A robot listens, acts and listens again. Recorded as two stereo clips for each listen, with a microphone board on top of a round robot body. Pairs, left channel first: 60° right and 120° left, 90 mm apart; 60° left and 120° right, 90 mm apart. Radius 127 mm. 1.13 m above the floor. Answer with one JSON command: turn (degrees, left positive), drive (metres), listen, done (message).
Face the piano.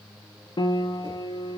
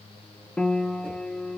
{"turn": -20}
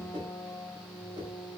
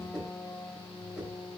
{"done": "Found it: a piano, straight ahead."}